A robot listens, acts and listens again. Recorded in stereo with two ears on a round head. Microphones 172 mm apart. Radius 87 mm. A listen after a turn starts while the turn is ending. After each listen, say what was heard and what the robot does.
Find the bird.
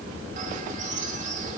The bird: about 40° right or 140° right. Turn 40° right.
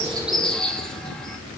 Found it: a bird, straight ahead.